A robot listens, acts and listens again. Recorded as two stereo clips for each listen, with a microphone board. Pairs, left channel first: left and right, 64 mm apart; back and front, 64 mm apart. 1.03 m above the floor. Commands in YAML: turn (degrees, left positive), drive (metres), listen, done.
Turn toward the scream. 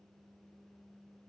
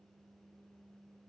listen: true
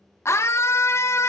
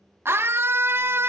turn: 50
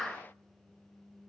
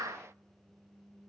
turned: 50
done: "Facing the scream."